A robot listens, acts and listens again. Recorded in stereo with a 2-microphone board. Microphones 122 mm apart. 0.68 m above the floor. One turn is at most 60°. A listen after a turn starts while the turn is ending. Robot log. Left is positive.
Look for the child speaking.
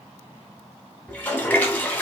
cmd idle
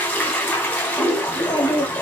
note: The child speaking: about 40° left or 140° left.
cmd yaw +40
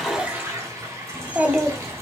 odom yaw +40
note: So it is at 15° right.
cmd yaw -15
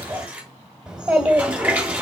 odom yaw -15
note: The child speaking is now 10° right.
cmd yaw -10
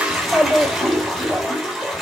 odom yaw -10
end: Facing the child speaking, 2 to 4 m away.